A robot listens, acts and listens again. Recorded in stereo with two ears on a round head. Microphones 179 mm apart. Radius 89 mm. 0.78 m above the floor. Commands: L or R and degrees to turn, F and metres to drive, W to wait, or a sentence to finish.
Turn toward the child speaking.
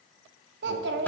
R60
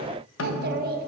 R55
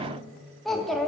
Found it: a child speaking, straight ahead, under 1 m away.